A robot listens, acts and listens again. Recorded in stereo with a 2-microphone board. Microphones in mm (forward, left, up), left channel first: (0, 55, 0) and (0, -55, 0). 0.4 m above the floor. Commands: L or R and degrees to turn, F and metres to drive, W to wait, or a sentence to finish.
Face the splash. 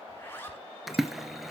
L30
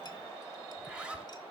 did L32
W
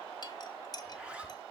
I heard a splash, but can't make it out now. It was about 35° right or 150° left.